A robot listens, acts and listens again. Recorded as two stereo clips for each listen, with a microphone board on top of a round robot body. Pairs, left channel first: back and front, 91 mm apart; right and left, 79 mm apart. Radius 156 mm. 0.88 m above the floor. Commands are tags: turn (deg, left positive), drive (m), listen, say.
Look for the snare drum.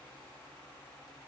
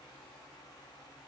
<listen/>
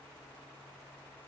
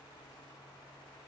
<listen/>
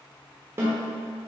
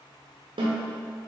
<turn deg="65"/>
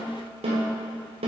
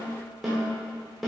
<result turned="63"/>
<say>Facing the snare drum, 1 to 2 m away.</say>